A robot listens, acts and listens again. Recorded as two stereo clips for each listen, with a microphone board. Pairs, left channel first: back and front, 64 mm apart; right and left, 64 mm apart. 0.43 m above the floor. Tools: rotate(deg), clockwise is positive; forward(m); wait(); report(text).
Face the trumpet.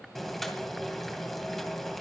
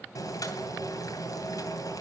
wait()
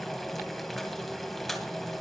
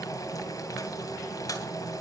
wait()
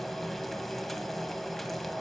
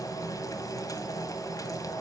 report("I can't make out a trumpet, only boiling.")